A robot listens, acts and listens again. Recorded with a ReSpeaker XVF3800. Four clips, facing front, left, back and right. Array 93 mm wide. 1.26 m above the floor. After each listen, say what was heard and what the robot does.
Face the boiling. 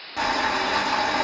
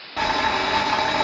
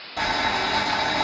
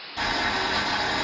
The boiling: 65° left. Turn 65° left.
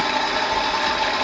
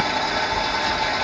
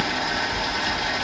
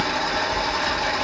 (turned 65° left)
Facing the boiling, 1 to 2 m away.